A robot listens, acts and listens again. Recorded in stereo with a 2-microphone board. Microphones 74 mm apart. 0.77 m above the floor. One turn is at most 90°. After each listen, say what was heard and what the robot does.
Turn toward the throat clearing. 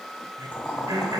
The throat clearing: about 60° right or 120° right. Turn 60° right.
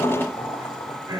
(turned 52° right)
So it is at 65° right. Turn 65° right.
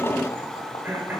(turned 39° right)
The throat clearing is now 25° right. Turn 25° right.
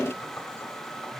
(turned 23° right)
Keep listening.
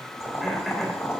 Keep listening.
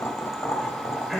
Found it: throat clearing, straight ahead, 2 to 4 m away.